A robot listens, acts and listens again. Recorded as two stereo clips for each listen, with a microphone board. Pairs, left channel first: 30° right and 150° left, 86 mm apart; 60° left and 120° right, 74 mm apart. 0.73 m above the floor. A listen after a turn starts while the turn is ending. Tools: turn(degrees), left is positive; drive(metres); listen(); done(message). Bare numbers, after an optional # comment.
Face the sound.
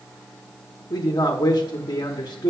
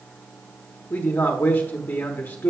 done("Found it: a man speaking, straight ahead, 1 to 2 m away.")